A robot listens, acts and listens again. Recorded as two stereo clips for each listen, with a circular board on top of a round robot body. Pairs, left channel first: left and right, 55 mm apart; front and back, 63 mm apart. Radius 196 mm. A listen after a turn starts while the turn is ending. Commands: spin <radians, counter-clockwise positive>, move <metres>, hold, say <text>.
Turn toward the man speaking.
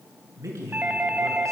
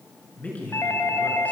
spin -1.13
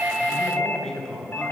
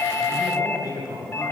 spin 0.17
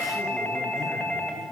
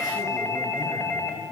hold
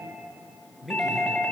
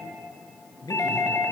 say Found it: a man speaking, straight ahead, over 4 m away.